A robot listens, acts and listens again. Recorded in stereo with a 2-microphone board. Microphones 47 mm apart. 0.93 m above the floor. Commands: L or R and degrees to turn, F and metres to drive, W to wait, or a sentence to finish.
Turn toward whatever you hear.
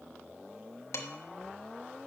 L90
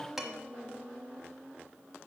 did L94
R10
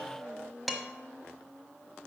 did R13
Found it: dishes clattering, straight ahead, 1 to 2 m away.